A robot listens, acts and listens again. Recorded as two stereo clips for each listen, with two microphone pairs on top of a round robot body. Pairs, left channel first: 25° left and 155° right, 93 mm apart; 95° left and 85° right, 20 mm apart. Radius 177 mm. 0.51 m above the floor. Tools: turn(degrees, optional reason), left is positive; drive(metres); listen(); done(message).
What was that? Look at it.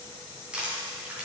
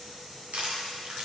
turn(degrees=-75, reason="The crushing: 75° right.")
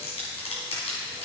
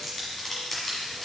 turn(degrees=15, reason="The crushing is now 15° left.")
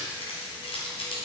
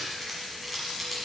done("Facing the crushing.")